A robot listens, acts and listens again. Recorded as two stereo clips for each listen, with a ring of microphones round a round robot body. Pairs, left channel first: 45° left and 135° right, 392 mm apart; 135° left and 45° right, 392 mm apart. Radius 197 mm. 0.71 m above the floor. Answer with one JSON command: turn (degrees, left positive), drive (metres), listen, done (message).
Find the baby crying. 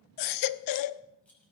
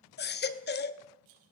{"turn": 75}
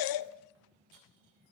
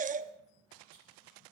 {"turn": 25}
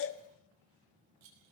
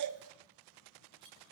{"done": "Facing the baby crying, under 1 m away."}